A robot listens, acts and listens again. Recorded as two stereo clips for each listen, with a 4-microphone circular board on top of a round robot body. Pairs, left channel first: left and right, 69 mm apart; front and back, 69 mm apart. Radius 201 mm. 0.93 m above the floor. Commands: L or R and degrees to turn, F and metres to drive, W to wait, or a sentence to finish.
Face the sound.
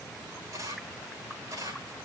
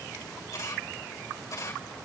R45
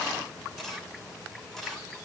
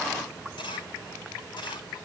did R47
Facing the camera shutter, over 4 m away.